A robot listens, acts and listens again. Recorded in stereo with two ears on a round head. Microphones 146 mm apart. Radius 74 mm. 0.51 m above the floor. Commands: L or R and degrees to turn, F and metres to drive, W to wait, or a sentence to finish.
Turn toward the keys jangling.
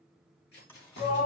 L70
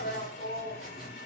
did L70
W
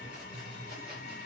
W
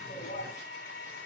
I heard keys jangling, but can't make it out now. It was about straight ahead or 40° left.